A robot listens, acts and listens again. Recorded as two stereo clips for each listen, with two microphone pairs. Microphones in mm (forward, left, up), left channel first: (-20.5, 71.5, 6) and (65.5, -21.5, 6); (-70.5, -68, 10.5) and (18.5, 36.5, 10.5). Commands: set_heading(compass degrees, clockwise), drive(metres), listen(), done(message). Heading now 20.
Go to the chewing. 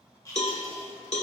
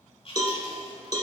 set_heading(190)
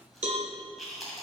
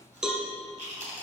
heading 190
set_heading(145)
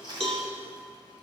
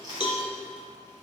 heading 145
drive(1.0)
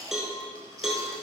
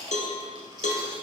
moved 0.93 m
drive(1.0)
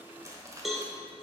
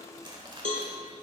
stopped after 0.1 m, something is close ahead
done("Arrived at the chewing, straight ahead.")